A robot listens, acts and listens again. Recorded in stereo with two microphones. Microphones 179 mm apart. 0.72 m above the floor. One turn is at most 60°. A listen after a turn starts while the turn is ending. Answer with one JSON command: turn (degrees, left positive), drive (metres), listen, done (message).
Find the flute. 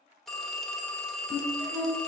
{"turn": -30}
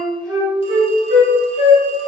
{"turn": -60}
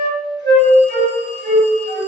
{"turn": -60}
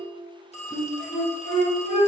{"turn": -35}
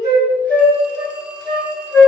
{"turn": 10}
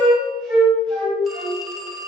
{"done": "Found it: a flute, straight ahead."}